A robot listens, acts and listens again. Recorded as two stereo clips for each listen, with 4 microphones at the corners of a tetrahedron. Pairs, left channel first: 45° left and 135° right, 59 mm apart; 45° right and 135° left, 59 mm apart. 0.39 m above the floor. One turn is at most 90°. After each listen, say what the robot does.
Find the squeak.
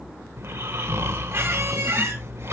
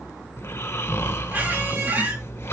Turn 90° right.
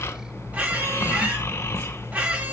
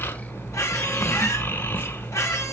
Turn 75° right.
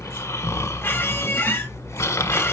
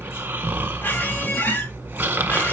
Found it: a squeak, straight ahead.